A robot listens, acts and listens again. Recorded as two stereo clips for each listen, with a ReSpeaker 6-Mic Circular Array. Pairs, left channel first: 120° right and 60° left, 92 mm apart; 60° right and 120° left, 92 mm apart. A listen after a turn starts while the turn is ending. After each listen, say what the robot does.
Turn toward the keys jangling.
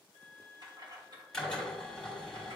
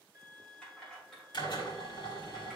Turn 25° left.
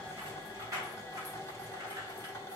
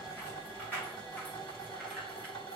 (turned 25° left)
Turn 10° left.
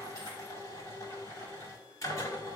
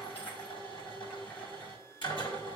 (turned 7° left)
Keep listening.
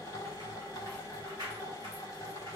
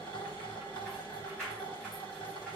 Turn 15° left.
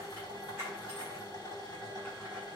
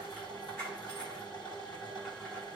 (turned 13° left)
Found it: keys jangling, straight ahead.